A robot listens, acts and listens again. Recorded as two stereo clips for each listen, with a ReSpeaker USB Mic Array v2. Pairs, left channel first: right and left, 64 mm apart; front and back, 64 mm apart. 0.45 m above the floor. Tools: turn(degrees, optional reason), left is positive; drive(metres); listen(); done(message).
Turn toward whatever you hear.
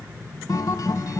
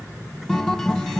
turn(degrees=-80, reason="The guitar: 80° right.")
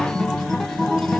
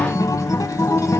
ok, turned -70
turn(degrees=-10, reason="The guitar is now 10° right.")
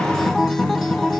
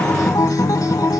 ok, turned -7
done("Found it: a guitar, straight ahead, under 1 m away.")